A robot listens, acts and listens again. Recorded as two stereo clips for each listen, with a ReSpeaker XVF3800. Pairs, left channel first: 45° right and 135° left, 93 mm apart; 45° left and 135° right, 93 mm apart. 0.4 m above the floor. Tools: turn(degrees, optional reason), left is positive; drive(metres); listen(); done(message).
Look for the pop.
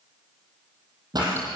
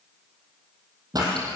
turn(degrees=175, reason="The pop: 175° left.")
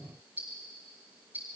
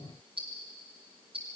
done("Facing where the pop came from. I can't hear it now.")